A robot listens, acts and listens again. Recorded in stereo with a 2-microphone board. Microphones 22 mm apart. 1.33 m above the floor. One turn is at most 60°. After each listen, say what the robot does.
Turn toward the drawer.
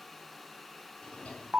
Turn 60° left.
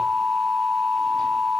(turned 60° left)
Turn 30° left.
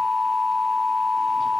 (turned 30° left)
Keep listening.
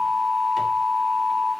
Facing where the drawer came from. I can't hear it now.